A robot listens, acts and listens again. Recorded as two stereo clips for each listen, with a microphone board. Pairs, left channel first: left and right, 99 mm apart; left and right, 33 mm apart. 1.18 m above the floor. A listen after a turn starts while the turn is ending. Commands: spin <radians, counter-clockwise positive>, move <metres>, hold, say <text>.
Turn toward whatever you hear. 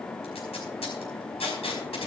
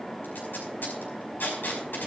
spin 1.57
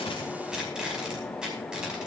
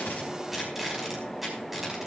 spin -0.17
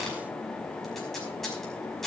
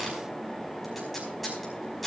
say Found it: tape being pulled, straight ahead, over 4 m away.